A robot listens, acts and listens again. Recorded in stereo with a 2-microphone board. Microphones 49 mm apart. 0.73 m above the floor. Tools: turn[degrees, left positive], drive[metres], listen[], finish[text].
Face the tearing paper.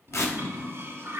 Thought: The tearing paper: about 75° left or 105° left.
Action: turn[75]
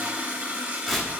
Action: finish[Facing the tearing paper.]